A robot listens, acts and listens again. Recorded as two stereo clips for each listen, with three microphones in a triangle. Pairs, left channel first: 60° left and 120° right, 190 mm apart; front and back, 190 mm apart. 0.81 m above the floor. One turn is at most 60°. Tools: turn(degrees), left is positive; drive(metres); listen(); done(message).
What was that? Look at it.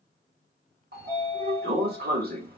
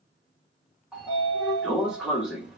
turn(degrees=-60)
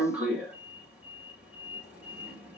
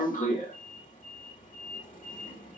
turn(degrees=-35)
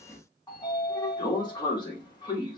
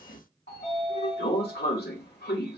done("Found it: a sliding door, straight ahead.")